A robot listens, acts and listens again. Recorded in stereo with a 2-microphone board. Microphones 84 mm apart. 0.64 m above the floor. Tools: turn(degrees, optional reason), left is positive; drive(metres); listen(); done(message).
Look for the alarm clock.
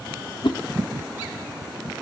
listen()
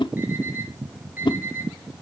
turn(degrees=-25, reason="The alarm clock: about 25° right or 155° right.")
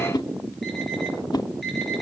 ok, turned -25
listen()
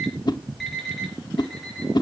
done("Found it: an alarm clock, straight ahead.")